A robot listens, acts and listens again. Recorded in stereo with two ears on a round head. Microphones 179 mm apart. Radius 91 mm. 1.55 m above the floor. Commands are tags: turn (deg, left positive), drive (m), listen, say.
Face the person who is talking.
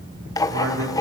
<turn deg="-75"/>
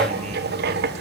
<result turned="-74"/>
<listen/>
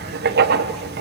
<listen/>
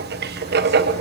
<say>I heard a man speaking, but can't make it out now. It was about straight ahead or 35° right.</say>